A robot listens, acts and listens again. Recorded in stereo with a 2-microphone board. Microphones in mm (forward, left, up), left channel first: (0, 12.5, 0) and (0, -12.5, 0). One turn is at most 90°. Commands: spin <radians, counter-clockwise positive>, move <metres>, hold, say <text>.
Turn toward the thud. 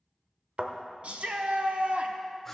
spin -1.05
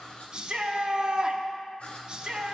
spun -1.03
hold
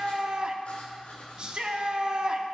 say I heard a thud, but can't make it out now. It was about straight ahead or 60° right.